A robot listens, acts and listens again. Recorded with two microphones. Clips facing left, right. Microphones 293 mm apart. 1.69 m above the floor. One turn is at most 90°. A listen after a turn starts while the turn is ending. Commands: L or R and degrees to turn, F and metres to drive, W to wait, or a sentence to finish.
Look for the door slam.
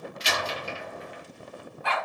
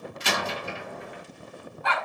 R60
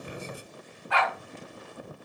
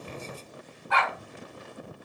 W
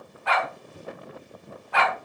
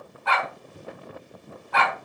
I heard a door slam, but can't make it out now. It was about straight ahead or 60° right.